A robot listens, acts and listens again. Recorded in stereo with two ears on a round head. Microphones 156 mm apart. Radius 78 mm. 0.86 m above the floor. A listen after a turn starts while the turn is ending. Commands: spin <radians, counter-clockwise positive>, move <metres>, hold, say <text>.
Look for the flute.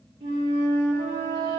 spin -0.52
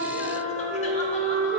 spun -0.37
spin -0.17
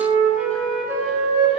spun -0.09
say Found it: a flute, straight ahead, 1 to 2 m away.